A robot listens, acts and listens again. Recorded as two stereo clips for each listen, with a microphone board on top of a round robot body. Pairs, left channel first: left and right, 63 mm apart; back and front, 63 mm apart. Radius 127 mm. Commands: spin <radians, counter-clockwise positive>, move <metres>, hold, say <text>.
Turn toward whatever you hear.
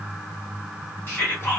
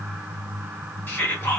spin 2.53
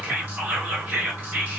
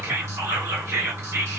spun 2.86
spin -0.35
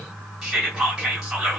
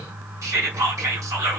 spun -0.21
say Found it: whispering, straight ahead.